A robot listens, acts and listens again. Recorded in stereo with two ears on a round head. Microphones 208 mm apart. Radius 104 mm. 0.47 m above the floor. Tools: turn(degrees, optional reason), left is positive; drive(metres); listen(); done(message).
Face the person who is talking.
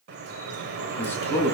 turn(degrees=30)
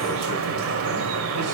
listen()
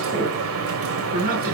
turn(degrees=-40, reason="So it is at 40° right.")
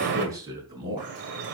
turn(degrees=-20, reason="The man speaking is now 20° right.")
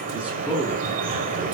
done("Facing the man speaking, over 4 m away.")